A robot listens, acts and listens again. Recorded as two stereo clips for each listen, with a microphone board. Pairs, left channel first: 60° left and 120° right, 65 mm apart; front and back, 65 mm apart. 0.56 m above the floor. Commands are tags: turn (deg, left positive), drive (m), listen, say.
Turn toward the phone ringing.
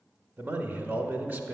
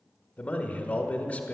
<listen/>
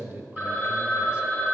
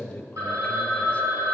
<turn deg="180"/>
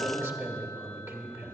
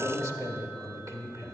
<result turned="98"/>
<turn deg="80"/>
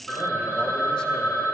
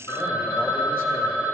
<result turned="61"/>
<turn deg="20"/>
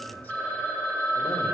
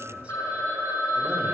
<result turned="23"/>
<say>Facing the phone ringing.</say>